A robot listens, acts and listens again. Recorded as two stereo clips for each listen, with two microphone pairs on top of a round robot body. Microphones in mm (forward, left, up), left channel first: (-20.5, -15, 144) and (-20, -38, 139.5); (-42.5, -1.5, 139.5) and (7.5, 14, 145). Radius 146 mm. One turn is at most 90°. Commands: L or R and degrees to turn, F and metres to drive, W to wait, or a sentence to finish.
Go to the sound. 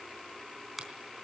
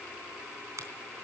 F1.0
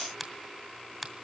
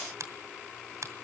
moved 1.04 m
F1.0
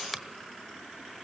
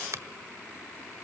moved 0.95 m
F1.0
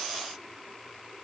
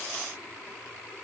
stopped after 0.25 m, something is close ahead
W
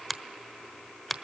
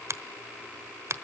I am next to the finger snap.